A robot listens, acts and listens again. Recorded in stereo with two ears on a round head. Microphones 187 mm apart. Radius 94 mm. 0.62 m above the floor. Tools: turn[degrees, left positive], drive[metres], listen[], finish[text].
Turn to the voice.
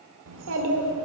Thought: The child speaking: about 65° right or 115° right.
Action: turn[-65]
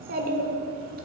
Thought: So it is at 45° right.
Action: turn[-45]
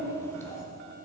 Thought: The child speaking is now 15° left.
Action: turn[15]
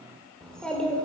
Action: finish[Facing the child speaking, 1 to 2 m away.]